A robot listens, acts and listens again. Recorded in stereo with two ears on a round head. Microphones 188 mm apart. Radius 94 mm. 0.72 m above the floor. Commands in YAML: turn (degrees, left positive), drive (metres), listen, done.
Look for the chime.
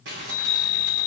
turn: 65
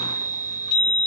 turn: 25
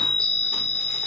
done: "Found it: a chime, straight ahead."